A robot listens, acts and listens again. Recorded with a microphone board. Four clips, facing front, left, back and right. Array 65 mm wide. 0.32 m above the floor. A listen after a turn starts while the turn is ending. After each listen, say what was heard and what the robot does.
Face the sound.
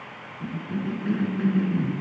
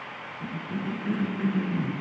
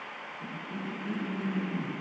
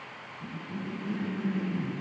The cough: 50° left. Turn 50° left.
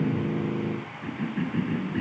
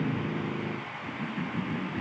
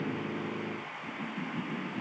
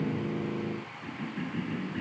Found it: a cough, straight ahead, over 4 m away.